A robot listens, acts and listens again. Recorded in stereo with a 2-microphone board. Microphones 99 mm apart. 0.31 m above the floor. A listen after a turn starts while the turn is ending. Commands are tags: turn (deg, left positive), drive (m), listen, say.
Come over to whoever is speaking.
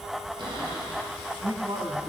<turn deg="-55"/>
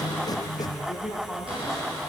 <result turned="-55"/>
<drive m="1.0"/>
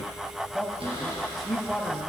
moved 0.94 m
<drive m="1.0"/>
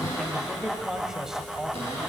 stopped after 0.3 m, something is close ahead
<turn deg="-10"/>
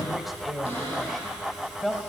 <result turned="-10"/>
<say>Arrived at the man speaking, straight ahead.</say>